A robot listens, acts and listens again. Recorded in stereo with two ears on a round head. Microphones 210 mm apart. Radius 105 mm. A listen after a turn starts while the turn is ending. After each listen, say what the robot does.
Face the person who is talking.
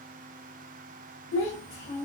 Turn 30° left.
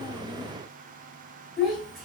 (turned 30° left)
Found it: a child speaking, straight ahead.